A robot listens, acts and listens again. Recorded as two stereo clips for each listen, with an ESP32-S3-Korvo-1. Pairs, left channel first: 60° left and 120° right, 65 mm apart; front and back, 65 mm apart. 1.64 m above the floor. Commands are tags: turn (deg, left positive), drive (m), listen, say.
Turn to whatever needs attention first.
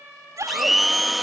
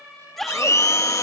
<turn deg="-85"/>
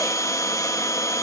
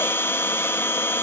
<listen/>
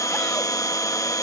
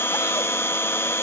<listen/>
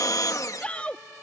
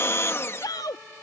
<turn deg="-10"/>
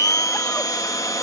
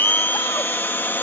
<listen/>
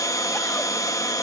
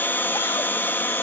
<listen/>
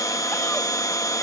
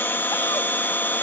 <say>Facing where the shout came from. I can't hear it now.</say>